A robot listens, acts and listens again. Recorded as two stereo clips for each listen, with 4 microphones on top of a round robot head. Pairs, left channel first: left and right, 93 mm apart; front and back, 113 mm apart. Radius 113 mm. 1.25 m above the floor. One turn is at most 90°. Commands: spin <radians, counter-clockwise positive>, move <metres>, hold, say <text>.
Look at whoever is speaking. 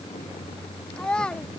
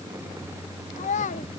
spin 0.17
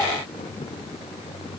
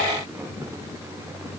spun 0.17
hold
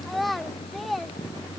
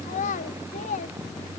say Facing the child speaking.